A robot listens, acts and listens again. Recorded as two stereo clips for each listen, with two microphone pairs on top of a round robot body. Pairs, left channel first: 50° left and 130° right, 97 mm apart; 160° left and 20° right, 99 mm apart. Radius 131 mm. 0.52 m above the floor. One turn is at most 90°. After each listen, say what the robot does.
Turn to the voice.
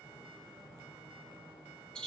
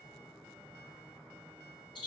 Keep listening.
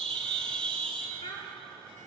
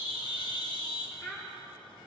Turn 90° left.
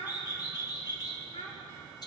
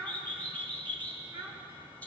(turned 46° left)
Turn 40° left.
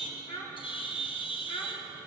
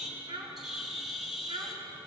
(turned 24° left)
Turn 20° left.
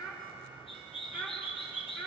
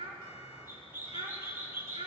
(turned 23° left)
Facing the child speaking.